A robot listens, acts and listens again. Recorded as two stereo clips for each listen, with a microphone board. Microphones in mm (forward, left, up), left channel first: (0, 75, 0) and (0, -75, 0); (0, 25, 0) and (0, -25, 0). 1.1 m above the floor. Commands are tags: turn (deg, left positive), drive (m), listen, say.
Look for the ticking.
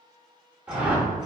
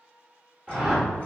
<listen/>
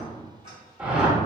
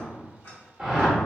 <listen/>
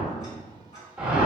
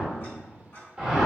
<turn deg="50"/>
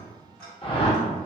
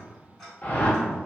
<say>Found it: ticking, straight ahead.</say>